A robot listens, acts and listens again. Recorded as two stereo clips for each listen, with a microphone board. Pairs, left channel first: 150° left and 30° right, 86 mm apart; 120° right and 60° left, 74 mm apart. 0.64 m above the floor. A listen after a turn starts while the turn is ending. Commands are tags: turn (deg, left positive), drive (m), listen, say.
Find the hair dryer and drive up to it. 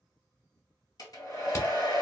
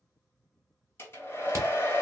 <turn deg="-175"/>
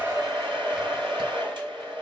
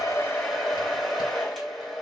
<turn deg="-30"/>
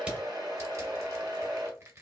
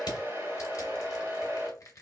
<drive m="1.0"/>
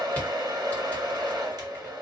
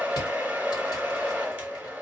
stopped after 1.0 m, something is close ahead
<say>I am next to the hair dryer.</say>